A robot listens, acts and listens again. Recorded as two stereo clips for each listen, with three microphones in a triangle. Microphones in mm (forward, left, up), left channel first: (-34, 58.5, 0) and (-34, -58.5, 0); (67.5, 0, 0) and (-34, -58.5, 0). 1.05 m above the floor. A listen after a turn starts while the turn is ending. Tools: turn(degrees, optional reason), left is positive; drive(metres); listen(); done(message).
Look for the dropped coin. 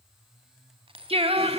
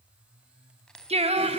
turn(degrees=-55, reason="The dropped coin: 55° right.")
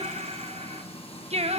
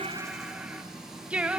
done("I heard a dropped coin from this way, but can't make it out now.")